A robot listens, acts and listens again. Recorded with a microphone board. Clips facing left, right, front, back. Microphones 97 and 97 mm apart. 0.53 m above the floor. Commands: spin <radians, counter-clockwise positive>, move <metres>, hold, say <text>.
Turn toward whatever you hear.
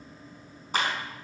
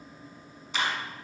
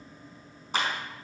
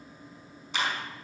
spin 0.79
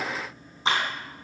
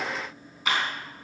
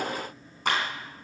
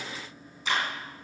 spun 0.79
spin 0.52
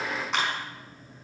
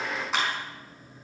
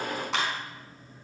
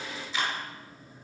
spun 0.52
say Found it: a clap, straight ahead, over 4 m away.